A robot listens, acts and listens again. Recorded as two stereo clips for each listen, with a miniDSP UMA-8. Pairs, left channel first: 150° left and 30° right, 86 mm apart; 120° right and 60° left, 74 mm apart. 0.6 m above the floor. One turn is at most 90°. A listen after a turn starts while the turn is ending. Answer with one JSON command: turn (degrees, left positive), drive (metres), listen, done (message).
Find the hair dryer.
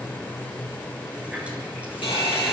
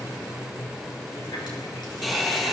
{"turn": 90}
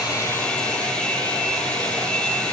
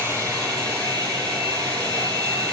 {"turn": 75}
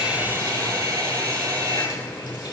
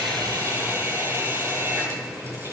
{"turn": 10}
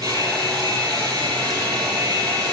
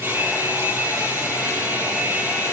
{"done": "Found it: a hair dryer, straight ahead, over 4 m away."}